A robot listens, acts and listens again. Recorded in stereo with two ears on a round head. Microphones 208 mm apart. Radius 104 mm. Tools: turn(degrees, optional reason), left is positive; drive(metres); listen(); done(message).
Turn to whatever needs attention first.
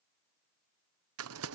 listen()
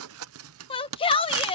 turn(degrees=25, reason="The shout: about 25° left or 155° left.")
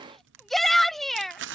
done("Found it: a shout, straight ahead.")